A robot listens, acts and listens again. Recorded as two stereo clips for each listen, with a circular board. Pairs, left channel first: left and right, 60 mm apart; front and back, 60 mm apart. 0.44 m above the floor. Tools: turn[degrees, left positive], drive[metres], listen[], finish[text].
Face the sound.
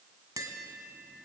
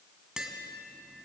Thought: The tapping: 100° right.
Action: turn[-100]
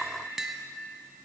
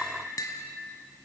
Action: finish[Found it: tapping, straight ahead, 1 to 2 m away.]